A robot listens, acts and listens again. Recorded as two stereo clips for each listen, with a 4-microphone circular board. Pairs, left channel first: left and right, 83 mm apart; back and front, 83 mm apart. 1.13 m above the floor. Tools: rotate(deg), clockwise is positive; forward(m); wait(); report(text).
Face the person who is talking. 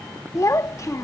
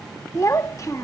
rotate(-135)
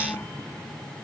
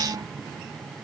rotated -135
wait()
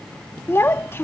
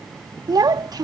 rotate(-35)
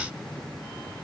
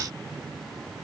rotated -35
wait()
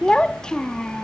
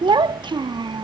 rotate(-10)
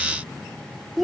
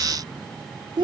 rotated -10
report("Facing the child speaking.")